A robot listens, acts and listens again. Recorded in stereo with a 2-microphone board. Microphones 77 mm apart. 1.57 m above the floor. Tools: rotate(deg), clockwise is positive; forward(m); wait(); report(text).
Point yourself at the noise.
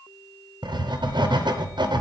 rotate(90)
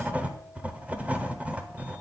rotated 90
rotate(15)
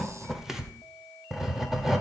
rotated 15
report("Facing the writing, under 1 m away.")